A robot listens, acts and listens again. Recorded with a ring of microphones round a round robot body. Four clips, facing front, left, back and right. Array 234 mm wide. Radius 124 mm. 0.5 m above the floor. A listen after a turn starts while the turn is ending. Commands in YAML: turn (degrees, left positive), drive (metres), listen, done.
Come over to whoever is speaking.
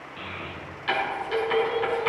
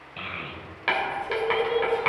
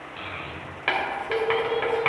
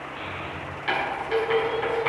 turn: 115
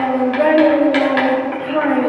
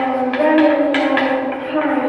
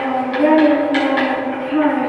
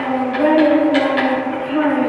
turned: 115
turn: 25
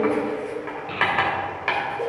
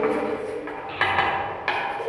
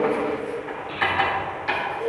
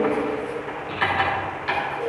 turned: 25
drive: 1.0
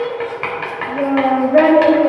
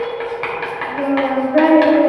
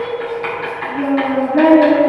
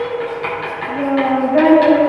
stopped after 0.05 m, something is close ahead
done: "Something is in my way. I am facing the child speaking but have not reached it."